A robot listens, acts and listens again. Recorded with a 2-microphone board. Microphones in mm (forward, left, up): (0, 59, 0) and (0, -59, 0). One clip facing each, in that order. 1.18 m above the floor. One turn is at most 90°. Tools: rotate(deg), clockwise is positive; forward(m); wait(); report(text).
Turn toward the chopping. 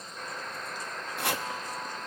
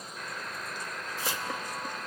rotate(-65)
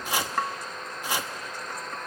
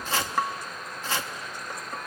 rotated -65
rotate(-15)
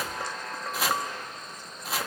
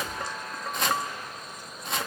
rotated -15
report("Facing the chopping.")